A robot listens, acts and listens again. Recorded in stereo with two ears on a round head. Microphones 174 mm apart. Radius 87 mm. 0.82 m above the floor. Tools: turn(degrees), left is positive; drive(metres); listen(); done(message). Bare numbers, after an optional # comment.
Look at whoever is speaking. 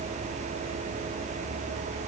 listen()
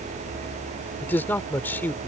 turn(30)
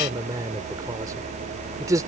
# So it is at 20° right.
turn(-20)
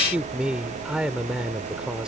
done("Found it: a man speaking, straight ahead.")